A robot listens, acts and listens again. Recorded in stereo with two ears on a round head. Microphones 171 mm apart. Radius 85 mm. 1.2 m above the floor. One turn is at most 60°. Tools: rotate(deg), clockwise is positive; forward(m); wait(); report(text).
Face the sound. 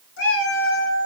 rotate(-60)
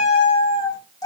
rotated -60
rotate(-15)
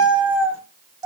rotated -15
rotate(20)
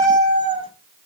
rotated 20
rotate(30)
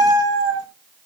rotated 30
rotate(25)
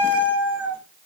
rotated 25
rotate(10)
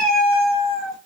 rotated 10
report("Found it: a cat meowing, straight ahead.")